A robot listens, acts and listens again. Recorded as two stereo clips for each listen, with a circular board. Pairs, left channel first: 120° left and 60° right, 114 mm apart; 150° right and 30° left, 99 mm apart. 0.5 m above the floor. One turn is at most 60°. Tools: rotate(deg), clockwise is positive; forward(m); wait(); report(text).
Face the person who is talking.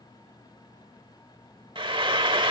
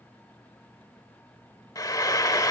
wait()
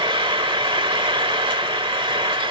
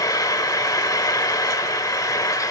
wait()
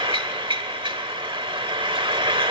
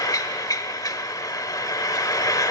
report("I can't make out anyone speaking to turn to.")